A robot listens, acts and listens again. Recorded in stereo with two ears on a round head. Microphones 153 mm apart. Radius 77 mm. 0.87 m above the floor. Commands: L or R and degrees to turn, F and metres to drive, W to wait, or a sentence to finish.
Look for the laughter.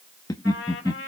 L20
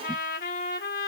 W
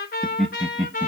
Facing the laughter, 1 to 2 m away.